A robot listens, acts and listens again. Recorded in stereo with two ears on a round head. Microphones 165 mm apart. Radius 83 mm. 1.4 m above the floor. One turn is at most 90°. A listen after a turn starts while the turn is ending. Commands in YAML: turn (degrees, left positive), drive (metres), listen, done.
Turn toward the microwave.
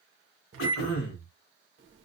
turn: -90
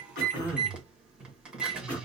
done: "Found it: a microwave, straight ahead, 1 to 2 m away."